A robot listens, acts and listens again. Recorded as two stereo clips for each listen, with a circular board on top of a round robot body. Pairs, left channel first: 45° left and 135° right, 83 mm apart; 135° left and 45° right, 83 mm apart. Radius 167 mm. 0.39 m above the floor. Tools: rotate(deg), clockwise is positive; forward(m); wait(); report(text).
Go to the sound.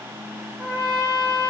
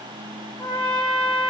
rotate(-180)
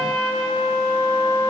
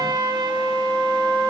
rotate(-55)
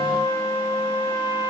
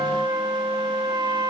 rotate(-10)
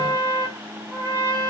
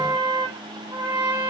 forward(1.0)
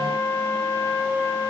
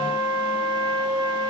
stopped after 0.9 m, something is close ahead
report("I am next to the trumpet.")